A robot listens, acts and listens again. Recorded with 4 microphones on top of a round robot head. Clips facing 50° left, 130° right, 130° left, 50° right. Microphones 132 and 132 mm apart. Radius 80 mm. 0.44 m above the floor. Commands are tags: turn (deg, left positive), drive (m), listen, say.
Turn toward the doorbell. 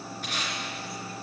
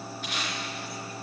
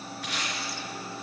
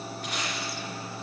<listen/>
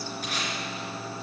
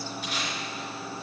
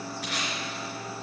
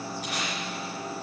<listen/>
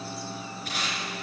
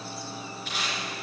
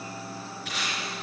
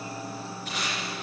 <say>I can't make out a doorbell to turn to.</say>